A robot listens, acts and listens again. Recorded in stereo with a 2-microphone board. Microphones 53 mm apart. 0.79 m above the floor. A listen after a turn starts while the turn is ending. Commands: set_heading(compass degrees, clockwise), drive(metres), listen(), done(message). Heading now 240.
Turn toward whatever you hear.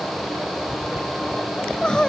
set_heading(225)
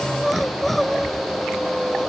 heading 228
done("Facing the crying.")